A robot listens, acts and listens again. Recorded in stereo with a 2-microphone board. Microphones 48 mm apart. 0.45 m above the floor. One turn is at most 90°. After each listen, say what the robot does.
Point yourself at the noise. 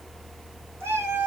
Turn 70° right.
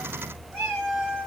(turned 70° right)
Turn 30° right.
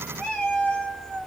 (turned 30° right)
Turn 15° left.
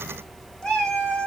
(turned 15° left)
Turn 15° left.
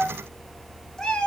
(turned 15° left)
Turn 15° left.
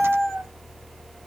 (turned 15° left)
Facing the cat meowing.